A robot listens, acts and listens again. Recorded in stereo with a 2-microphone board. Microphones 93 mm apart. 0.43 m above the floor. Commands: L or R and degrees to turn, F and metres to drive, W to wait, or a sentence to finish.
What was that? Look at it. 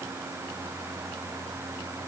W
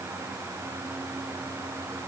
W
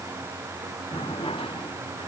L90
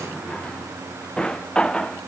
L10
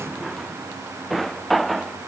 Facing the drawer.